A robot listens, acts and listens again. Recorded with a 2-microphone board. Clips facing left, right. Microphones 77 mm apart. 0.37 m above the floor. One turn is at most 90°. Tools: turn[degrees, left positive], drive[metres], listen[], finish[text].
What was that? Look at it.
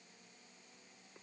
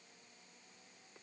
Action: listen[]
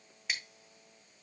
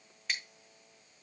Action: turn[30]
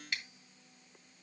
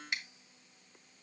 Thought: So it is at 20° right.
Action: turn[-20]
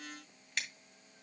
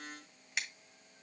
Thought: The scissors is now 10° right.
Action: turn[-10]
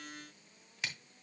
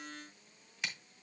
Action: finish[Facing the scissors, 2 to 4 m away.]